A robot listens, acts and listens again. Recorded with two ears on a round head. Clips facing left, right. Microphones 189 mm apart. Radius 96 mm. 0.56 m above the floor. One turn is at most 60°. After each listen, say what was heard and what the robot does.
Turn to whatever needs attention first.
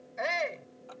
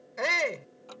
The shout: about 65° right or 115° right. Turn 60° right.
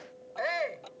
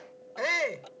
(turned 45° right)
So it is at 60° right. Turn 60° right.
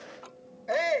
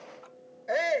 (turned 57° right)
Found it: a shout, straight ahead.